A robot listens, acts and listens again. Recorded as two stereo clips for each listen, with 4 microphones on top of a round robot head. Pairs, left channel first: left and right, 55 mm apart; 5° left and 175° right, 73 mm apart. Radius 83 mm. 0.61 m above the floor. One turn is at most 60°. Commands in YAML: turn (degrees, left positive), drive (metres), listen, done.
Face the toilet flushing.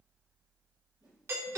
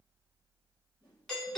listen: true
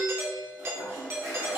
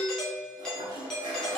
turn: -60
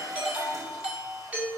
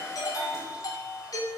turn: -60
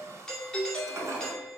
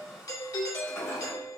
turn: -55
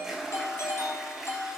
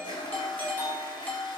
done: "Found it: a toilet flushing, straight ahead, 2 to 4 m away."